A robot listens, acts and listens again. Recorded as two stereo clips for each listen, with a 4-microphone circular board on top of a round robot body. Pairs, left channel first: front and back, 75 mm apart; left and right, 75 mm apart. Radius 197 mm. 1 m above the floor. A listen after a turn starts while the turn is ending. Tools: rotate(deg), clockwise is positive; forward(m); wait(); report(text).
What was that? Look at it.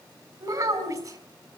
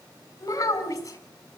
rotate(-140)
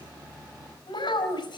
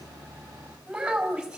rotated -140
rotate(10)
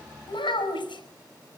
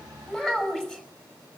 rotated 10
report("Facing the child speaking.")